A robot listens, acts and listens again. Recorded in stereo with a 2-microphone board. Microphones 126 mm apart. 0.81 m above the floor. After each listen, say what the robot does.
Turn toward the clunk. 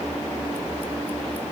Keep listening.
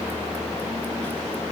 Keep listening.
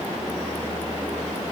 I can't make out a clunk to turn to.